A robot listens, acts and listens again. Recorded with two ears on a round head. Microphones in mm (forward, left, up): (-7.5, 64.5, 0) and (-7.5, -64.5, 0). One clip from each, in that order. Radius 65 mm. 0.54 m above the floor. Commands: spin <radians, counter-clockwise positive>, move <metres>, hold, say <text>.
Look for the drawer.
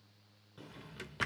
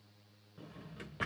spin 1.57
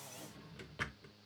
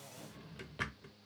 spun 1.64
say Facing the drawer, under 1 m away.